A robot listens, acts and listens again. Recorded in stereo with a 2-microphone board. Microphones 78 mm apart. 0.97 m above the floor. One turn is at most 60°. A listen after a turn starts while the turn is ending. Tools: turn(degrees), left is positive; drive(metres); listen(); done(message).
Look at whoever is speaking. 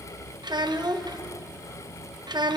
turn(degrees=-60)
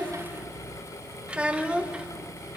turn(degrees=-15)
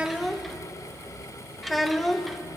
done("Found it: a child speaking, straight ahead.")